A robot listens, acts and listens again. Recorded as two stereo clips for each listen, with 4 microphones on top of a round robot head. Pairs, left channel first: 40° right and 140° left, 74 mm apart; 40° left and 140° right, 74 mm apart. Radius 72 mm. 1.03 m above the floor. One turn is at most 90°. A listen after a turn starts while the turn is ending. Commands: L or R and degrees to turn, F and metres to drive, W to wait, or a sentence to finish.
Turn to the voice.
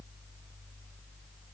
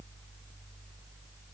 W
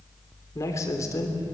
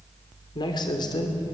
L10
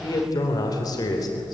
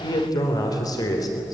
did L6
Facing the man speaking.